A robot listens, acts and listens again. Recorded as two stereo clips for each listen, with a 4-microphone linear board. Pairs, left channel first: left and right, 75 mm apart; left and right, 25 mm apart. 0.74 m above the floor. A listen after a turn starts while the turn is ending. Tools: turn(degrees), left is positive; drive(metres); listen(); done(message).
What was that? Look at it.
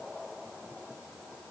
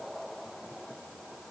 listen()
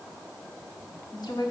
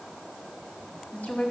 turn(degrees=65)
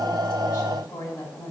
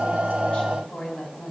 turn(degrees=50)
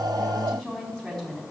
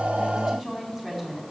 done("Found it: a woman speaking, straight ahead, over 4 m away.")